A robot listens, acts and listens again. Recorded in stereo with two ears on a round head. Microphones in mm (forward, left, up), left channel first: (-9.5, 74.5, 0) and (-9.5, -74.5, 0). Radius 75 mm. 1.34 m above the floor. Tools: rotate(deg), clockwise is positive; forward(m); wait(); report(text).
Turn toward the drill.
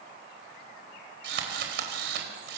rotate(70)
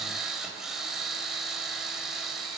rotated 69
report("Facing the drill.")